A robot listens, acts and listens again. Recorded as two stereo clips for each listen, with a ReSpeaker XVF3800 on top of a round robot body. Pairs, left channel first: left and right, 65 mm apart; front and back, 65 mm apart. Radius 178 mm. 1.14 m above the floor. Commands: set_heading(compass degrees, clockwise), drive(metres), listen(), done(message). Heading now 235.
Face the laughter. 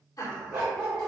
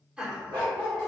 set_heading(125)
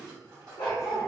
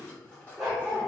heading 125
listen()
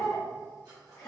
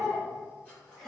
set_heading(45)
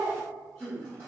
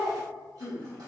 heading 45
set_heading(35)
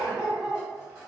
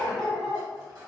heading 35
listen()
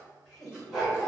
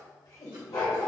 set_heading(25)
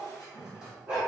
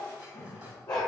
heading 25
done("Found it: laughter, straight ahead.")